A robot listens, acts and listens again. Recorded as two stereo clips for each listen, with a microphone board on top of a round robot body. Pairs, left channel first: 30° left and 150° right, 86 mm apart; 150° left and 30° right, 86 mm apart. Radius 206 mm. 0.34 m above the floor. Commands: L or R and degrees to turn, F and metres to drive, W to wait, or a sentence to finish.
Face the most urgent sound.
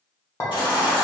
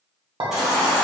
L55
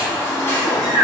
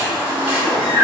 R30
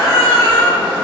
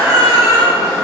L15
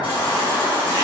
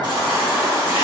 Facing the baby crying.